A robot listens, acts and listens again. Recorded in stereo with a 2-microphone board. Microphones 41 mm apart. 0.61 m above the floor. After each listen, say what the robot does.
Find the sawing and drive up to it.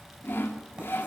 Turn 65° left.
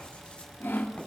Turn 45° left.
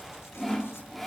Drive 1.0 m forward.
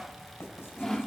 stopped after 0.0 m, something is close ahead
Something is in my way. I am facing the sawing but have not reached it.